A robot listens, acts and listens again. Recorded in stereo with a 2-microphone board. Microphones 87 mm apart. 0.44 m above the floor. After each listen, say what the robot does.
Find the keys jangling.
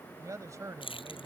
Turn 90° left.
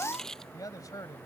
Facing the keys jangling.